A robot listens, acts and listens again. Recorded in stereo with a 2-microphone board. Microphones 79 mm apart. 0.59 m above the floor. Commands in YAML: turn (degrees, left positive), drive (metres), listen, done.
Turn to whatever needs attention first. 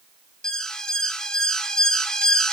turn: 30
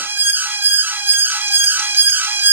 turn: -30
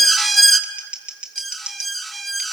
done: "Found it: an alarm, straight ahead."